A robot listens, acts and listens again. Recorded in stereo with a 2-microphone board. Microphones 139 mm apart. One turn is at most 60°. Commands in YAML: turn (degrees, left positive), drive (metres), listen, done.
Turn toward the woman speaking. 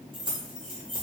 listen: true
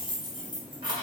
listen: true
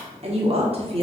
turn: -45
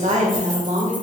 turn: -60
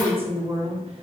turn: -55
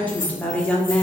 turn: 10
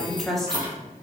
done: "Found it: a woman speaking, straight ahead, under 1 m away."